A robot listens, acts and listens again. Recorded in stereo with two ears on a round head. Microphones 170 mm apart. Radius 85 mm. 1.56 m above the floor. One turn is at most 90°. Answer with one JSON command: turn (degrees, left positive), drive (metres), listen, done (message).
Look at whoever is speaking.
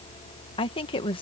{"turn": 30}
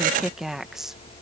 {"done": "Found it: a woman speaking, straight ahead."}